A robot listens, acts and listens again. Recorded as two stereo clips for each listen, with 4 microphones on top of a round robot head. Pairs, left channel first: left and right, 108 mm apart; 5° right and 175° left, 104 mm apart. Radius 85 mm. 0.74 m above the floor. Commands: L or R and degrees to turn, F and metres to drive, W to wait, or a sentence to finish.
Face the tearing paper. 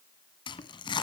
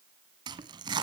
L130
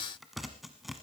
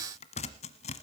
Facing the tearing paper.